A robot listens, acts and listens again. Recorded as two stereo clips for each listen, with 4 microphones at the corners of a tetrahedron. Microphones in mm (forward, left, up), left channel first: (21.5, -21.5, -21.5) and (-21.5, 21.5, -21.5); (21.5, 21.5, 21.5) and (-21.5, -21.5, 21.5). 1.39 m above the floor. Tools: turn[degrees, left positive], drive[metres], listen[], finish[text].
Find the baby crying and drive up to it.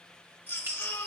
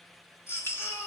Thought: The baby crying: 10° left.
Action: turn[10]
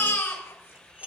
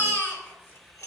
Action: drive[1.0]
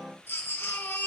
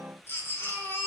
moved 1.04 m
Action: drive[1.0]
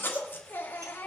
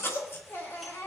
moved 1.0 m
Action: drive[1.0]
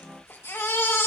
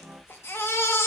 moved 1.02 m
Action: drive[1.0]
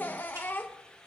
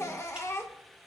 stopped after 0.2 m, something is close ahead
Thought: The baby crying is now 10° left.
Action: turn[10]
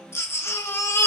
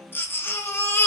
Action: finish[Arrived at the baby crying, straight ahead.]